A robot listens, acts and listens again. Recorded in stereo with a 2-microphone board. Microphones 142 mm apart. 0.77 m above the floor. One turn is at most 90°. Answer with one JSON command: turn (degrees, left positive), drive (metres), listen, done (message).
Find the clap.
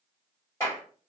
{"turn": 20}
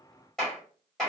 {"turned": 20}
{"done": "Found it: a clap, straight ahead, 1 to 2 m away."}